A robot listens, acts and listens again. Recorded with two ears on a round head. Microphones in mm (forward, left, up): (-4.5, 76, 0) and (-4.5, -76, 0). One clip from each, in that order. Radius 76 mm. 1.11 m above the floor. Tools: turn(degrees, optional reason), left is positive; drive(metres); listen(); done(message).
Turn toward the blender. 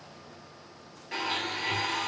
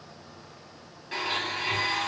turn(degrees=30)
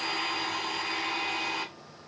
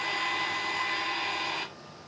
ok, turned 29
turn(degrees=150, reason="So it is at 150° left.")
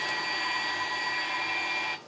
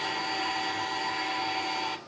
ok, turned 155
done("Facing the blender, 2 to 4 m away.")